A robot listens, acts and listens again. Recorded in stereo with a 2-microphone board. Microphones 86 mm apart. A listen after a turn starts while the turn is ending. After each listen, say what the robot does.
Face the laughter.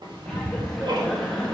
Turn 30° left.
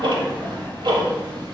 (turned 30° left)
Keep listening.
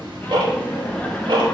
Turn 30° left.
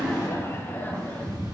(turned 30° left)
Turn 160° left.
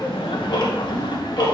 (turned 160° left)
Turn 70° left.
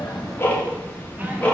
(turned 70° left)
Turn 20° right.
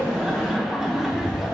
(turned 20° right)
Facing the laughter, 1 to 2 m away.